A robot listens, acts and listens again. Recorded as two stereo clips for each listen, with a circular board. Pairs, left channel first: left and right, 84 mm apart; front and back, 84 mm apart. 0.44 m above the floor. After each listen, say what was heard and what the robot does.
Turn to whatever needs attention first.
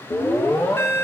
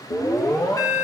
The alarm: 35° left. Turn 35° left.
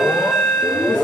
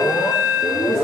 Found it: an alarm, straight ahead, under 1 m away.